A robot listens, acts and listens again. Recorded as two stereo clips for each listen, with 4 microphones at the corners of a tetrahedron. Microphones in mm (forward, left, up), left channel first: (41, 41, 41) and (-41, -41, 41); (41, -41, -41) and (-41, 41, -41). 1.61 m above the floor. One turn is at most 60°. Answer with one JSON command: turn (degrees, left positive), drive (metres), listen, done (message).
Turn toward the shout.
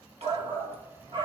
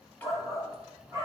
{"turn": -60}
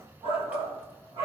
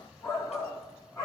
{"turn": -60}
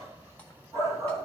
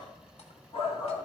{"turn": -60}
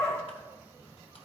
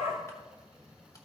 {"turn": -35}
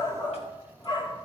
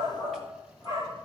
{"done": "Found it: a shout, straight ahead, 2 to 4 m away."}